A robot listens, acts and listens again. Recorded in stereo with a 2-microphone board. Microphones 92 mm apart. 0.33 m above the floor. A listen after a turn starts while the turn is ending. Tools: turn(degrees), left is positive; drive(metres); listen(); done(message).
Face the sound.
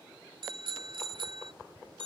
turn(degrees=-65)
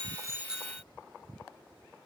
turn(degrees=-10)
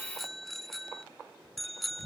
done("Found it: a bicycle bell, straight ahead.")